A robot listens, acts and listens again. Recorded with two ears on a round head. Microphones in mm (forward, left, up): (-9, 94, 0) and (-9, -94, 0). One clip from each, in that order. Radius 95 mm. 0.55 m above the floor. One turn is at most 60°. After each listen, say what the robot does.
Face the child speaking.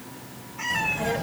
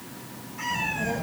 Turn 60° left.
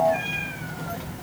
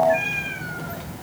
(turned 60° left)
Found it: a child speaking, straight ahead, 1 to 2 m away.